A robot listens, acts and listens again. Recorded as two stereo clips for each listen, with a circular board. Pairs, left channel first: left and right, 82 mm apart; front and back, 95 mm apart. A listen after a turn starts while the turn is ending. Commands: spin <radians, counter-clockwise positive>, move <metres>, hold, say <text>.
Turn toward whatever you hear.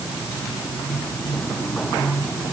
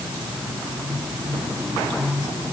hold
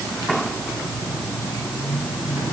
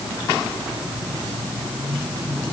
hold
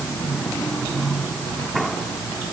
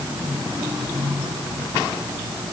say I can't make out anything.